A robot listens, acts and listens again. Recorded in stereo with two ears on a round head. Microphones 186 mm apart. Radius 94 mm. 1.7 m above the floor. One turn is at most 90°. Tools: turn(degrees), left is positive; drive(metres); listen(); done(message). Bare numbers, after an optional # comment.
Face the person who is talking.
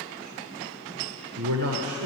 turn(-90)
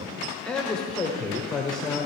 done("Found it: a man speaking, straight ahead.")